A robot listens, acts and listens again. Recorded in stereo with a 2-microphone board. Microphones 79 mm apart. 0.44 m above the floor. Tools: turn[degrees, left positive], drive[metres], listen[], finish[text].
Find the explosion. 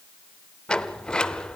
Action: listen[]
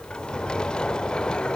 Action: listen[]
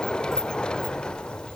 Action: finish[I can't make out an explosion, only a sliding door.]